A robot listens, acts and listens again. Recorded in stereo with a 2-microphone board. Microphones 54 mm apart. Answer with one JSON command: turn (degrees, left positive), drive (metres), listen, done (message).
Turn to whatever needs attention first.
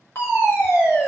{"turn": 50}
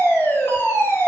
{"turn": 70}
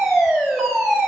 {"done": "Found it: a fire alarm, straight ahead."}